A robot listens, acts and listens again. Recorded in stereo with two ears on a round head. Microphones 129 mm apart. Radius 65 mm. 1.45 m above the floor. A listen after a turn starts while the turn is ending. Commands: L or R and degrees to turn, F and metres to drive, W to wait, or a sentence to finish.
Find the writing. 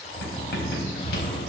L75
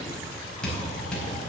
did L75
Facing the writing.